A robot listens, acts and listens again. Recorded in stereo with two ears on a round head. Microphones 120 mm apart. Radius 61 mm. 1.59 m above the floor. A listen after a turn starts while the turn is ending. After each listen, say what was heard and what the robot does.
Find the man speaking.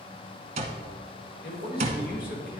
Turn 90° left.
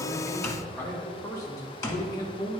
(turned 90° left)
So it is at 35° left. Turn 35° left.
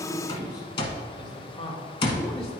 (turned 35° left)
The man speaking is now 40° left. Turn 40° left.
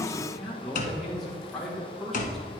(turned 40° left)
Found it: a man speaking, straight ahead, 1 to 2 m away.